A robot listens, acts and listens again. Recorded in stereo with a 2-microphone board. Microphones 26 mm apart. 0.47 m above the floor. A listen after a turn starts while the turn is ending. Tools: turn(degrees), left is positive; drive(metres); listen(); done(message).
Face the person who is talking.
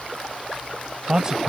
turn(degrees=-30)
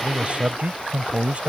turn(degrees=-115)
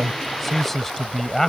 turn(degrees=15)
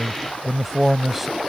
done("Found it: a man speaking, straight ahead.")